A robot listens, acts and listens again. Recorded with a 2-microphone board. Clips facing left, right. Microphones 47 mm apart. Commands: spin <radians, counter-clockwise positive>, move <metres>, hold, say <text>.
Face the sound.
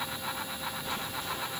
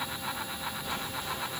hold
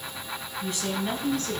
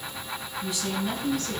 spin 0.87
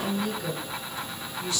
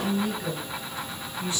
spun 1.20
spin -0.52
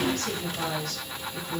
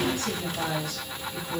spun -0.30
spin -0.35
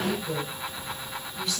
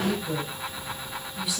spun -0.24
spin -0.17
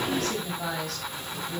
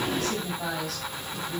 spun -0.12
say Facing the woman speaking, 2 to 4 m away.